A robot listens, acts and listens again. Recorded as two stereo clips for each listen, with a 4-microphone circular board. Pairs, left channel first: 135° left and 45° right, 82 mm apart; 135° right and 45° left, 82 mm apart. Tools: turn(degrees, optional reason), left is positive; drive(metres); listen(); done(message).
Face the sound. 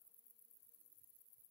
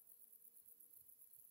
listen()
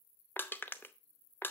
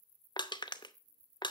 turn(degrees=-160, reason="The crushing: 160° right.")
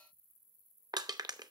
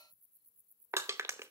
turn(degrees=-10, reason="The crushing is now 10° right.")
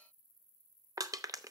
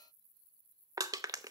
done("Found it: crushing, straight ahead.")